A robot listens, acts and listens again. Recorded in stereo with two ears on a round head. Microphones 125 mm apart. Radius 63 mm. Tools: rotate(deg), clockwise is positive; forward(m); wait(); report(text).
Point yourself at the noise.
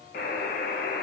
rotate(-70)
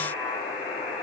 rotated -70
rotate(-40)
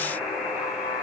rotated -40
report("Found it: a buzzer, straight ahead.")